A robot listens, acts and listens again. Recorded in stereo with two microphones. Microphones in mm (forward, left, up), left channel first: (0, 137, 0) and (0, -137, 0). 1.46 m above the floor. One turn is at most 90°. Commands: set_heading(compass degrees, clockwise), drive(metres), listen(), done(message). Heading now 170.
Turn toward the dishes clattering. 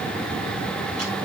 listen()
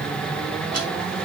listen()
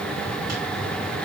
done("I can't make out dishes clattering.")